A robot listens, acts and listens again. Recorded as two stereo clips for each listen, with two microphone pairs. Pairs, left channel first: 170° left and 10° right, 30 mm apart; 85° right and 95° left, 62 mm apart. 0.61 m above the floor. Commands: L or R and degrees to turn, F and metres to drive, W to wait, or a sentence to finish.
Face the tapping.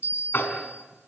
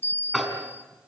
R175
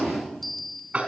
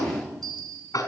R60
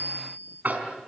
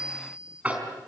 L25
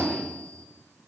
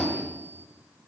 Found it: tapping, straight ahead.